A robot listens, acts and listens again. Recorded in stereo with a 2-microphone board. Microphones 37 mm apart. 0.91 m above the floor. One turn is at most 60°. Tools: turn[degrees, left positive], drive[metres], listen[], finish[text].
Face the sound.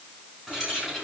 Action: turn[-30]
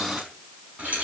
Thought: So it is at 140° right.
Action: turn[-60]
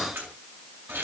Thought: The keys jangling is now 80° right.
Action: turn[-60]
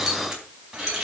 Thought: The keys jangling is now 10° right.
Action: turn[-10]
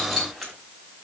Action: finish[Found it: keys jangling, straight ahead.]